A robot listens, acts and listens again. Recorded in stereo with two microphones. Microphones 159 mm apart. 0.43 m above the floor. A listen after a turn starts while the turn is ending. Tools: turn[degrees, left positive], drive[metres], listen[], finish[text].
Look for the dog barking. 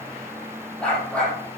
Action: turn[30]
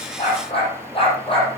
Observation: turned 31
Thought: So it is at 145° left.
Action: turn[145]
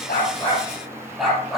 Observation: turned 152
Action: finish[Found it: a dog barking, straight ahead.]